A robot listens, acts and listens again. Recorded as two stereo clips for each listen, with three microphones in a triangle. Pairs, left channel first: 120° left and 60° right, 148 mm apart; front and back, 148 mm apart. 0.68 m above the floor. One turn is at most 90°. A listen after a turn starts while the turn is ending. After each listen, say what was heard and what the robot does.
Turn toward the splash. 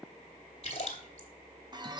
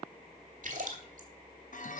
The splash: 165° left. Turn 90° left.
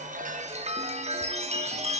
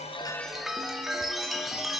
Nothing new. It was at 75° left. Turn 75° left.
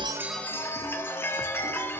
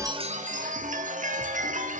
I heard a splash from this way, but can't make it out now.